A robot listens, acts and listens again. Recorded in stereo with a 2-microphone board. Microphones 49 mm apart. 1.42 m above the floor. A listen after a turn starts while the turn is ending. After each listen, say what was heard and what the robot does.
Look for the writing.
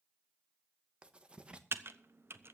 The writing: about 25° right or 155° right. Turn 25° right.
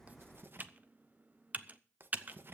So it is at 130° right. Turn 130° right.
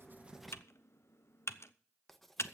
Found it: writing, straight ahead.